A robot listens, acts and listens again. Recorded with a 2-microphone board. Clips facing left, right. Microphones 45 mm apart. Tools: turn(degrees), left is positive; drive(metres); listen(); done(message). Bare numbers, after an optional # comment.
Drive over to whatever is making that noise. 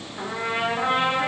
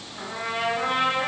turn(30)
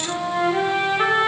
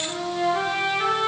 # So it is at 135° left.
turn(135)
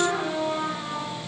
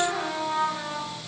drive(1.0)
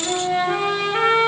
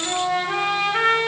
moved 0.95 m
drive(1.0)
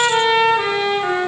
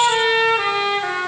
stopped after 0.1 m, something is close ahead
# The trumpet is now 10° right.
turn(-10)
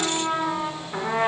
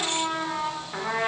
done("I am next to the trumpet.")